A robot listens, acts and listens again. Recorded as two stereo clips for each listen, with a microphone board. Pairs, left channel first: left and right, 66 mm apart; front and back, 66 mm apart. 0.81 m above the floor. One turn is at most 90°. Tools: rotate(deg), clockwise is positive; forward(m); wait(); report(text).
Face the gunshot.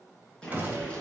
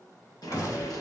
rotate(25)
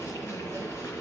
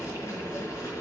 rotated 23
report("Facing where the gunshot came from. I can't hear it now.")